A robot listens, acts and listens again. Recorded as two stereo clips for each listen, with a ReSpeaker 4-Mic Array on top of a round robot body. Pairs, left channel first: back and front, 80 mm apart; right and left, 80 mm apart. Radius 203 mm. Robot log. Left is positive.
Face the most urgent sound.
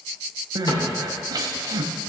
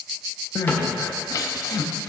note: The crying: 45° right.
cmd yaw -45
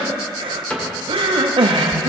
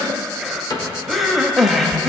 end: Facing the crying, under 1 m away.